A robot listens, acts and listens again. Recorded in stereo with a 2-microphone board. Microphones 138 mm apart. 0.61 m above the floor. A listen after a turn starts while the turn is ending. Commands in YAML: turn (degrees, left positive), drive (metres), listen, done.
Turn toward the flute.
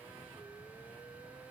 listen: true
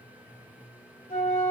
turn: 70
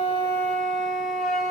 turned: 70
done: "Facing the flute, 2 to 4 m away."